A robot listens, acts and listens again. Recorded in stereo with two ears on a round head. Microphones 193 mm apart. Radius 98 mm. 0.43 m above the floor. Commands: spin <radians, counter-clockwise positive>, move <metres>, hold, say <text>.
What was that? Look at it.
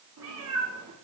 spin -1.57
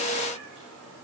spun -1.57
say Found it: a cat meowing, straight ahead, over 4 m away.